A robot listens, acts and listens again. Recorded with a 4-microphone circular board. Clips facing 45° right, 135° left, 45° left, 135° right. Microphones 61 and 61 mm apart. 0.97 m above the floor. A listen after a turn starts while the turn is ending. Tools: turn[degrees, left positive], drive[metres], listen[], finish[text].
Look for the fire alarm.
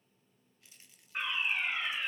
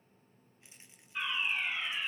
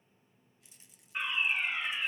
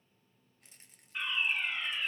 Thought: The fire alarm: 20° right.
Action: turn[-20]
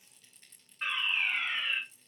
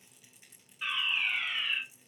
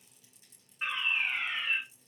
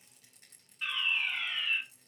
Action: finish[Found it: a fire alarm, straight ahead.]